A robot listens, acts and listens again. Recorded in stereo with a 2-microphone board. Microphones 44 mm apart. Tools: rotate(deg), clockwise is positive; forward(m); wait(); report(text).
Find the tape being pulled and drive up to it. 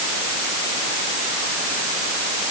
wait()
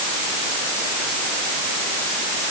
wait()
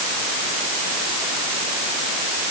report("I can't make out tape being pulled to turn to.")